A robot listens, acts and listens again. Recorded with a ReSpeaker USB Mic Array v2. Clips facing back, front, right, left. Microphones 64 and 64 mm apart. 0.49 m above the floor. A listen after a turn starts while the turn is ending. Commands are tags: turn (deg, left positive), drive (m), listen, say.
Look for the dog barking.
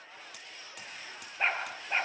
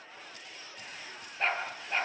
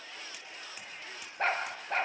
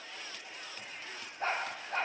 <turn deg="-110"/>
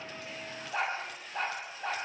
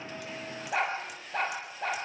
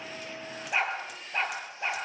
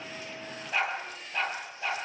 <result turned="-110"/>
<turn deg="-20"/>
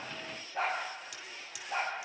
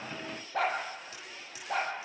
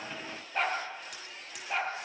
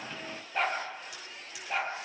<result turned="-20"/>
<say>Facing the dog barking, over 4 m away.</say>